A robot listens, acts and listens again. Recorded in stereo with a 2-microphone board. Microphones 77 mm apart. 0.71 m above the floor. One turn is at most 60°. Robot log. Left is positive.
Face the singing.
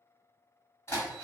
cmd idle
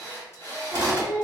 note: The singing: about 20° right or 160° right.
cmd yaw -20
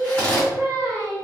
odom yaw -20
note: So it is at 135° right.
cmd yaw -60
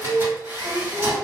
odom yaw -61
note: The singing is now 75° right.
cmd yaw -60
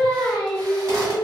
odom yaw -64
note: The singing is now 10° right.
cmd yaw -10
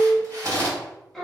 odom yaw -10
end: Found it: singing, straight ahead.